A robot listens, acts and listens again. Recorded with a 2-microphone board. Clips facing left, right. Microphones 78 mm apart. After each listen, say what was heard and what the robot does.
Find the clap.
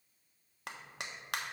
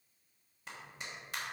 The clap: about 70° left or 110° left. Turn 70° left.
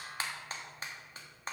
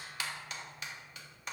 So it is at 35° left. Turn 35° left.
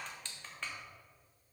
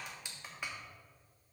The clap is now 10° right. Turn 10° right.
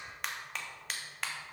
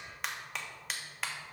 Facing the clap.